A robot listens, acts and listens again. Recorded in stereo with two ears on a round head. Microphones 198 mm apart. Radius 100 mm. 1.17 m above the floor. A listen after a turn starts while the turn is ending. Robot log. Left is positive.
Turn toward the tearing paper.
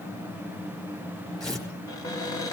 cmd yaw +30
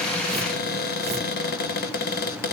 cmd idle
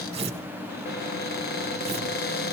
note: So it is at 25° right.
cmd yaw -25
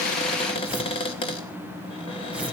end: Facing the tearing paper.